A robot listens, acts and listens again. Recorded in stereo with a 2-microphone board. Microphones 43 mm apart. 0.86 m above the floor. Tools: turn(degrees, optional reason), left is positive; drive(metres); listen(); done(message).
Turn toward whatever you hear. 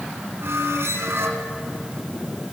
turn(degrees=-75, reason="The squeak: about 75° right or 105° right.")
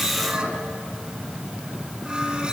turn(degrees=-20, reason="So it is at 20° right.")
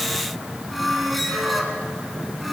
done("Facing the squeak.")